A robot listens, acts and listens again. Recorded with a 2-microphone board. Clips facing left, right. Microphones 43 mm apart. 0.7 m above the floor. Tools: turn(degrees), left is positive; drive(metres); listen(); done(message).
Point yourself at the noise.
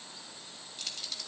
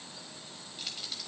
turn(degrees=-30)
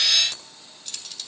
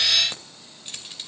turn(degrees=-155)
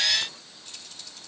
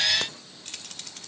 turn(degrees=-75)
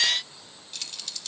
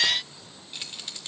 turn(degrees=-30)
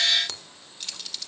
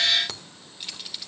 turn(degrees=-15)
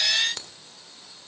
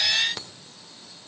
done("Facing the keys jangling, 1 to 2 m away.")